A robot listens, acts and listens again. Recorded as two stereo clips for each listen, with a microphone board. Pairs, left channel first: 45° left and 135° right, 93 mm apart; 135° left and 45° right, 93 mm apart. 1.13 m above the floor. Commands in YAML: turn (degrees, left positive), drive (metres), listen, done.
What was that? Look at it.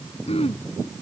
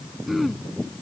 turn: 45
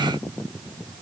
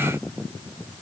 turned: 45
listen: true
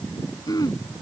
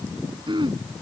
done: "Found it: throat clearing, straight ahead."